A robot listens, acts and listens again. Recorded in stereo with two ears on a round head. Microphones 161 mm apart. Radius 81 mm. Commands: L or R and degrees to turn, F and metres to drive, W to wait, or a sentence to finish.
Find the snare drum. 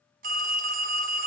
W
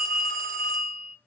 W
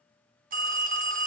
I can't make out a snare drum to turn to.